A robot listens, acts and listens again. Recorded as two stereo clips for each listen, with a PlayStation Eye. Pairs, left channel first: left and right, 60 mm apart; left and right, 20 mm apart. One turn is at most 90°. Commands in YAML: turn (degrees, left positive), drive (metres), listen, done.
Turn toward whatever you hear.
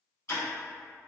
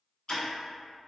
turn: 50
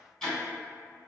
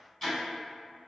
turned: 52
done: "Facing the ticking."